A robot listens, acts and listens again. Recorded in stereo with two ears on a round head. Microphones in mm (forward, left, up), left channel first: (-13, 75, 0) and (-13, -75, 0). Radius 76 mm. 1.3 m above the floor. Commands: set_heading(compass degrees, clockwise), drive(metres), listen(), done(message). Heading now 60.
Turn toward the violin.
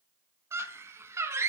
listen()
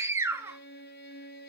set_heading(355)
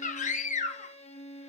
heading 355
set_heading(315)
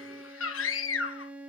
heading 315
set_heading(325)
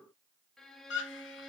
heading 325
done("Facing the violin.")